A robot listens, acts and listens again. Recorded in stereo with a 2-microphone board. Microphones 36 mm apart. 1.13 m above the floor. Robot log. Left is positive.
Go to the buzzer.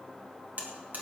note: The buzzer: about 55° right or 125° right.
cmd yaw -55
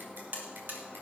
note: So it is at 70° right.
cmd yaw -70
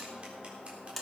cmd fwd 1.0
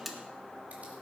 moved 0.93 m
cmd fwd 1.0
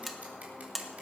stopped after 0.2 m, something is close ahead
end: Arrived at the buzzer, straight ahead.